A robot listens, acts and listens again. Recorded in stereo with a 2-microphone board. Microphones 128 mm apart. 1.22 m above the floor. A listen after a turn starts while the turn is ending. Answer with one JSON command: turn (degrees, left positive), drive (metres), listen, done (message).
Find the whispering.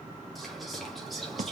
{"turn": 30}
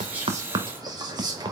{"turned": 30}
{"turn": -30}
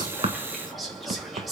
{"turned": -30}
{"done": "Facing the whispering."}